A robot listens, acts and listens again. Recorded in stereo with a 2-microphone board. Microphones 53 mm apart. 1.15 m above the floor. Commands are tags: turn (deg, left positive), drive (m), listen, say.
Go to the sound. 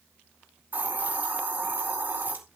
<turn deg="-40"/>
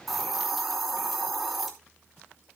<drive m="1.0"/>
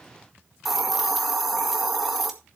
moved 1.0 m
<drive m="1.0"/>
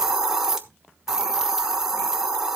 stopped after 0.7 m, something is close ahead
<turn deg="-10"/>
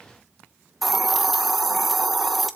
<say>Arrived at the hiss, straight ahead.</say>